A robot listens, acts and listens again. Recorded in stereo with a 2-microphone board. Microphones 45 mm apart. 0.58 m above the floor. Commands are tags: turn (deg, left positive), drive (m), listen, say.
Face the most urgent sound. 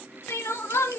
<turn deg="90"/>
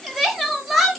<say>Facing the crying, under 1 m away.</say>